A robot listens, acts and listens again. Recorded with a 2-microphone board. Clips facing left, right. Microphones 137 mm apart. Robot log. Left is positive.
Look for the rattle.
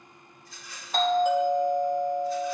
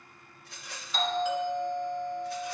note: The rattle: about 65° right or 115° right.
cmd yaw -65
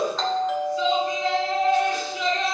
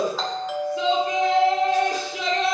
cmd idle
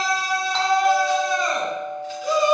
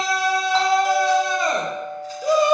cmd idle
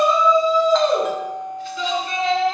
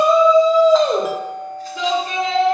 end: I heard a rattle, but can't make it out now. It was about straight ahead or 50° right.